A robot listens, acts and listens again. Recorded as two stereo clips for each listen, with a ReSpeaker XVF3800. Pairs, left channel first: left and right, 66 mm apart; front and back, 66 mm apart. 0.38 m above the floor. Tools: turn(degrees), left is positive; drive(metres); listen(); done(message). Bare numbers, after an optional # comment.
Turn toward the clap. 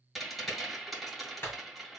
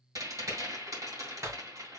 # The clap: 140° left.
turn(140)
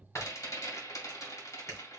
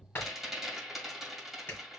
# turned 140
# The clap is now 55° left.
turn(55)
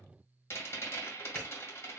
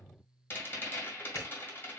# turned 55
listen()
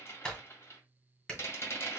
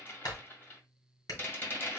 # The clap is now 10° left.
turn(10)
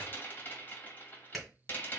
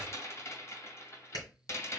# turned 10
done("Facing the clap, 2 to 4 m away.")